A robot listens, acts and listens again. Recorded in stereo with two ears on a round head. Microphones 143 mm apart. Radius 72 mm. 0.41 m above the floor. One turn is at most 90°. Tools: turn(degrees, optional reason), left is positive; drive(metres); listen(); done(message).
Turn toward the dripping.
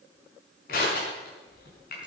listen()
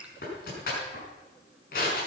listen()
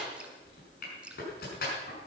turn(degrees=-30)
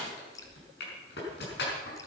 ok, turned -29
turn(degrees=25, reason="So it is at 25° left.")
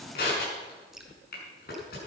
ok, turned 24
listen()
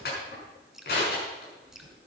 done("Found it: dripping, straight ahead.")